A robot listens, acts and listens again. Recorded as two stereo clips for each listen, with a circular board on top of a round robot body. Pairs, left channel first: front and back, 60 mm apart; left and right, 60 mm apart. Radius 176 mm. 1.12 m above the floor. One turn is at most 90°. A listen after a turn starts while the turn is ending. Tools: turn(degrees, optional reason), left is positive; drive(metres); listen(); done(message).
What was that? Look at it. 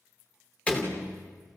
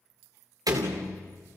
turn(degrees=-70, reason="The door slam: 70° right.")
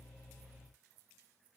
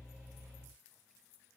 done("I heard a door slam from this way, but can't make it out now.")